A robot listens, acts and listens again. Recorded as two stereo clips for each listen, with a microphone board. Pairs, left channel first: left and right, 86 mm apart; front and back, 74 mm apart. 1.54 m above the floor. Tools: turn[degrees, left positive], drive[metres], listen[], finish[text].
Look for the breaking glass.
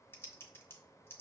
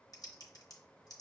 Action: listen[]
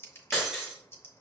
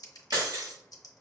Thought: The breaking glass: 175° right.
Action: turn[-175]
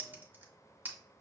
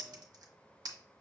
Action: finish[I heard breaking glass from this way, but can't make it out now.]